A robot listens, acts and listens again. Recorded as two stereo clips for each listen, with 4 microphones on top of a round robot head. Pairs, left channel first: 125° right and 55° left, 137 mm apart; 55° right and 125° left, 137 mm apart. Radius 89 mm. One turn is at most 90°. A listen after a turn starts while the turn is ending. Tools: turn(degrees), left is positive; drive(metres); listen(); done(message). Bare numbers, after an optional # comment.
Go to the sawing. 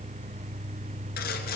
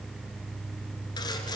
# The sawing: 115° right.
turn(-90)
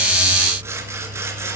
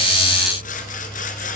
# The sawing is now 20° right.
turn(-20)
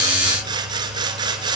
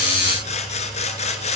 # The sawing is now 10° right.
turn(-10)
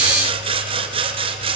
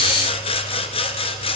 drive(1.0)
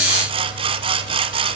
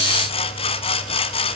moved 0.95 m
drive(1.0)
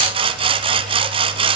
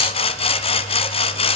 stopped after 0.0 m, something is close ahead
done("Arrived at the sawing, straight ahead.")